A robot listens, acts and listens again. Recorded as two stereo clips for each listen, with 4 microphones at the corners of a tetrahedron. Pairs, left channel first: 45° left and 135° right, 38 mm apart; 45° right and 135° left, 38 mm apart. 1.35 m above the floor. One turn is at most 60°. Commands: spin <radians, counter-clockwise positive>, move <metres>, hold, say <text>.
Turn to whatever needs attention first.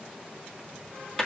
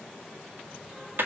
hold
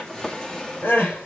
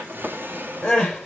spin 0.35
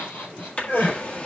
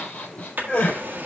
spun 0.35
say Found it: crying, straight ahead, over 4 m away.